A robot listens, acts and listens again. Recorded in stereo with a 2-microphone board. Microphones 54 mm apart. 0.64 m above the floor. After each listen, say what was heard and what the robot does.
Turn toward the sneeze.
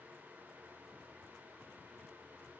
Keep listening.
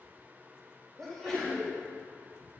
Turn 30° left.
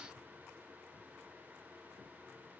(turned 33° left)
Keep listening.
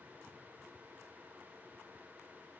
I heard a sneeze, but can't make it out now. It was about 25° right or 140° left.